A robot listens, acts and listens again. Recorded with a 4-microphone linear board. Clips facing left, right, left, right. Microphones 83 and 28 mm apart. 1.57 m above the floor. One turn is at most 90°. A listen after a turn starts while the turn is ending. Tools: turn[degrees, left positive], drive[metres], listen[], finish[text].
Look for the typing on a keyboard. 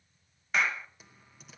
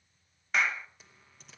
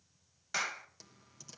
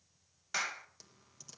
Action: turn[30]
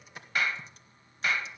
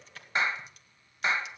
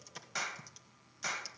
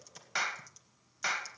Thought: So it is at 150° left.
Action: turn[90]
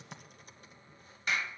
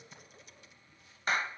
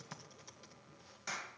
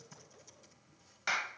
Thought: The typing on a keyboard is now 40° left.
Action: turn[40]
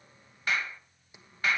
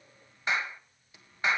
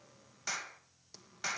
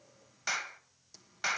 Thought: The typing on a keyboard is now 20° left.
Action: turn[20]
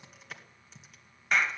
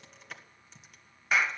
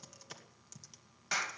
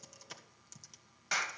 Action: finish[Found it: typing on a keyboard, straight ahead, 2 to 4 m away.]